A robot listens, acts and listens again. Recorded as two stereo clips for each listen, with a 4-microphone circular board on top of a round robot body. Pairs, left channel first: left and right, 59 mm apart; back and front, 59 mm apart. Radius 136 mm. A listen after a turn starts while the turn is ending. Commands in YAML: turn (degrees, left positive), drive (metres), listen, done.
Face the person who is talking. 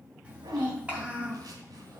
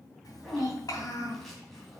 turn: -155
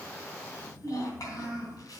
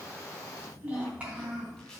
turn: 70
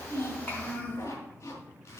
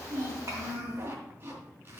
turn: 25
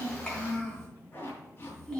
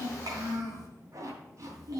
turn: 10
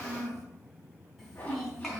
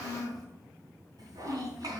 done: "Found it: a child speaking, straight ahead, 2 to 4 m away."